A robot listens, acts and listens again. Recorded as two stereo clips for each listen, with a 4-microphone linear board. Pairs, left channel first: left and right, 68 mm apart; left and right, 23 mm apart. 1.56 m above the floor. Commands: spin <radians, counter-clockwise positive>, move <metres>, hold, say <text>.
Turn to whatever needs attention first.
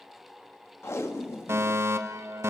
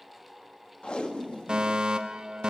spin -0.70
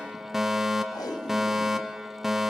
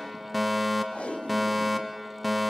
say Found it: a fire alarm, straight ahead, 1 to 2 m away.